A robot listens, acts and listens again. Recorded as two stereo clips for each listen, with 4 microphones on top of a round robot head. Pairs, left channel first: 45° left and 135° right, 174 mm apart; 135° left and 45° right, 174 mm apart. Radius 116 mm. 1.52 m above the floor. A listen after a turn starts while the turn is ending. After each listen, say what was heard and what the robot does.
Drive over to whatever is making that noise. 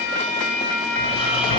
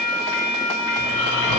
The snoring: 105° left. Turn 105° left.
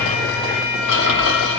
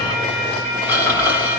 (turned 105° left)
The snoring is now 35° left. Turn 35° left.
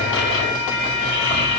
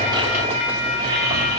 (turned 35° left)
Drive 1.0 m forward.
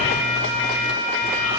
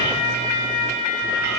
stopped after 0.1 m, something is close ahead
Blocked. The snoring is further on, straight ahead.